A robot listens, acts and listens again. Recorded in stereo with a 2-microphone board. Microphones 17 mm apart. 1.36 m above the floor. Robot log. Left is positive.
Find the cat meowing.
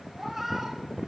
cmd yaw -30
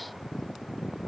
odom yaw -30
cmd idle
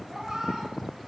note: So it is at 140° right.
cmd yaw -140
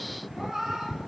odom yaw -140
note: The cat meowing is now 40° right.
cmd yaw -40
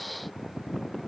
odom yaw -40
cmd idle
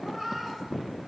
note: The cat meowing is now 10° right.
cmd yaw -10
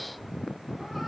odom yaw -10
cmd idle
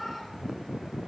end: Facing the cat meowing.